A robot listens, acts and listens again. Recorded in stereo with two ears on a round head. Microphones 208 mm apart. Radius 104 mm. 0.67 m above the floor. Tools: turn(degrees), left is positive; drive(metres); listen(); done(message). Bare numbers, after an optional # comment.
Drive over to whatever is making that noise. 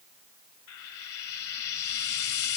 # The frying: about 70° left or 110° left.
turn(70)
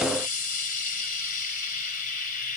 # So it is at 40° left.
turn(40)
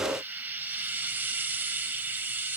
# The frying is now 10° right.
turn(-10)
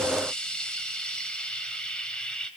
drive(1.0)
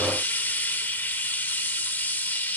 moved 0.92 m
# The frying is now 10° left.
turn(10)
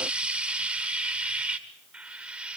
drive(1.0)
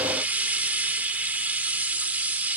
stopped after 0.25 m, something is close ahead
# The frying is now 10° right.
turn(-10)
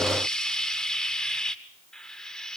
done("I am next to the frying.")